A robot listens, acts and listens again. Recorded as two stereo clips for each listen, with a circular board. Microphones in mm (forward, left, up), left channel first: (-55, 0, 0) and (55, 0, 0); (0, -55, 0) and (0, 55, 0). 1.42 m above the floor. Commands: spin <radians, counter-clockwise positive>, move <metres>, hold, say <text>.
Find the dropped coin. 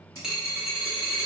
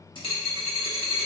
spin -1.40
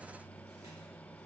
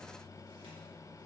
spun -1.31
say Facing where the dropped coin came from. I can't hear it now.